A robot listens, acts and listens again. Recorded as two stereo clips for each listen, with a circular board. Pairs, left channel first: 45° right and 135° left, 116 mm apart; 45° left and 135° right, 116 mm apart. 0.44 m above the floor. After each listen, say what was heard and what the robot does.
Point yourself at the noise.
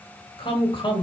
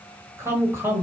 The woman speaking: 70° right. Turn 70° right.
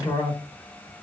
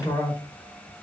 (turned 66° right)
Found it: a woman speaking, straight ahead.